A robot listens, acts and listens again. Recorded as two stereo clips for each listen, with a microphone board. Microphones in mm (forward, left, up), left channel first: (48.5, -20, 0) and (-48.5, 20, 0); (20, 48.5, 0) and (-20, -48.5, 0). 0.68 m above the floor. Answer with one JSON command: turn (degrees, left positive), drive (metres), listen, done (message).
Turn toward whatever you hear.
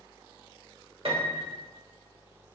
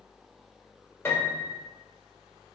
{"turn": 130}
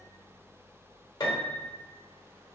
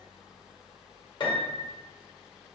{"turn": 25}
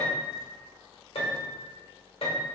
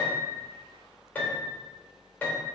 {"done": "Facing the piano, 1 to 2 m away."}